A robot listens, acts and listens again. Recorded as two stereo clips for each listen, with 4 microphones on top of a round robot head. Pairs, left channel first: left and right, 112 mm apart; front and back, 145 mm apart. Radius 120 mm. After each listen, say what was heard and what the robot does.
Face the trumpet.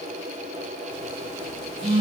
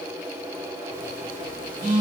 Keep listening.
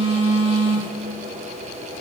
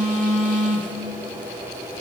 Keep listening.
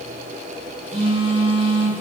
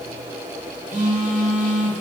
I can't make out a trumpet to turn to.